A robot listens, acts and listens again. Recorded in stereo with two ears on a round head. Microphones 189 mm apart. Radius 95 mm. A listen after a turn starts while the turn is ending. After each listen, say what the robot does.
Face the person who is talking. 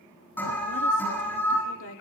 Turn 65° left.
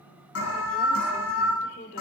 Turn 40° left.
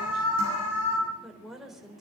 Facing the woman speaking.